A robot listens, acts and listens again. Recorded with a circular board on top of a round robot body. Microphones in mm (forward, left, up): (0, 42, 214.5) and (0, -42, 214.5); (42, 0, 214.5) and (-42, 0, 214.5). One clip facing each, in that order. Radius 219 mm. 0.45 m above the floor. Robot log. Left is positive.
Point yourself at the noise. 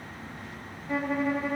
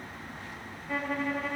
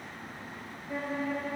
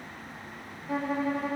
note: The violin: 175° left.
cmd yaw +175
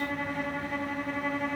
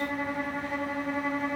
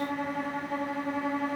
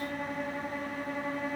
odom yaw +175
note: The violin is now 10° right.
cmd yaw -10
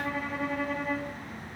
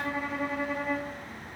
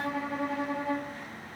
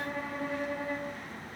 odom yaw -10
end: Found it: a violin, straight ahead.